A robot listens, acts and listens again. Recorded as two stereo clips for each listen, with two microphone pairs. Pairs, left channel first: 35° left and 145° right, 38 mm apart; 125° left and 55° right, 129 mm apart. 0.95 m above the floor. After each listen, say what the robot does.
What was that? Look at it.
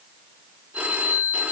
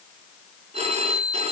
Turn 95° right.
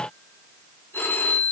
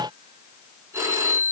Turn 15° left.
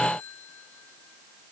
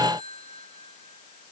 Found it: a phone ringing, straight ahead, over 4 m away.